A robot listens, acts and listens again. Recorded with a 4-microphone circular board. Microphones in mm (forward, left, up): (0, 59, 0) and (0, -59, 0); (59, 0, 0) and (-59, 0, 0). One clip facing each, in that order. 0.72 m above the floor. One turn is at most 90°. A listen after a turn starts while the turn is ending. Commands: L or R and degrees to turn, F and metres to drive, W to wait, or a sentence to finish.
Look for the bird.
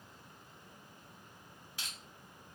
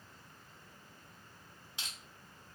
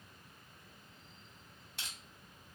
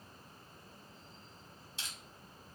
W
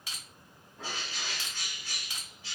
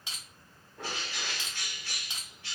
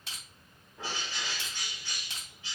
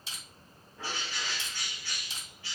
R70
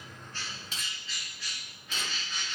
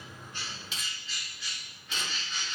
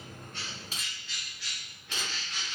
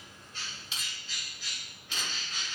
Found it: a bird, straight ahead.